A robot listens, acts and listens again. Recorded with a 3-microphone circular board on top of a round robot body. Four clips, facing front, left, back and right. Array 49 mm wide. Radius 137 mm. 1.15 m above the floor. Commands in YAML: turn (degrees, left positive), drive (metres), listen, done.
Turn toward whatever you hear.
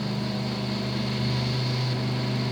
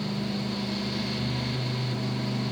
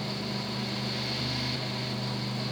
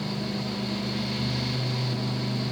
listen: true
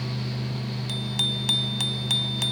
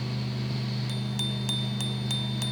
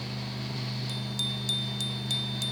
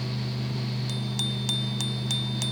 done: "Facing the bicycle bell."